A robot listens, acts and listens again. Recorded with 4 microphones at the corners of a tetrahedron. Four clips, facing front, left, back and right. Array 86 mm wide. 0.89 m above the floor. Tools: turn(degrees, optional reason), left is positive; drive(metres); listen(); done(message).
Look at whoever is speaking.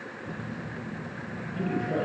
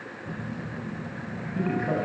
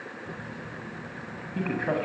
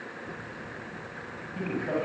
turn(degrees=165, reason="The man speaking: 165° left.")
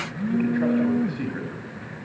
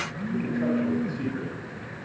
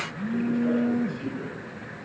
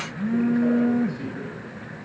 listen()
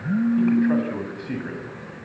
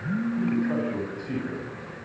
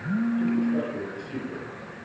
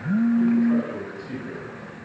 done("Facing the man speaking, over 4 m away.")